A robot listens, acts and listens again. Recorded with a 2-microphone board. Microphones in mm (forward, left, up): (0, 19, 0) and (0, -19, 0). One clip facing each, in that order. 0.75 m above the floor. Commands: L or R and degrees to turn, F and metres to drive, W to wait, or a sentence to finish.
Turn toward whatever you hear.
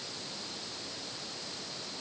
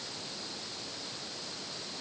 W
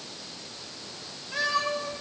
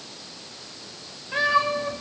R20
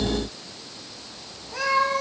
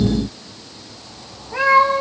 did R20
R30
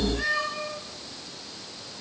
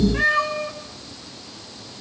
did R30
R125
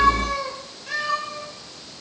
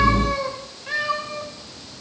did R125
R20
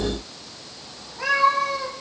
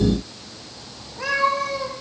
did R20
Facing the cat meowing.